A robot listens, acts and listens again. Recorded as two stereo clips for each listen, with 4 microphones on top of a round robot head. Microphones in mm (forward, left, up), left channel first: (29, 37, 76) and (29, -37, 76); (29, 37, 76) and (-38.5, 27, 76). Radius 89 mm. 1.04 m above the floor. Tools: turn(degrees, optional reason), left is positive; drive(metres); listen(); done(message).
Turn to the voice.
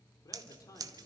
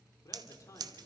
turn(degrees=45, reason="The man speaking: 45° left.")
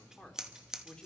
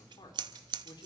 turn(degrees=10, reason="The man speaking is now 10° left.")
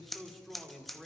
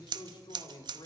done("Facing the man speaking, 2 to 4 m away.")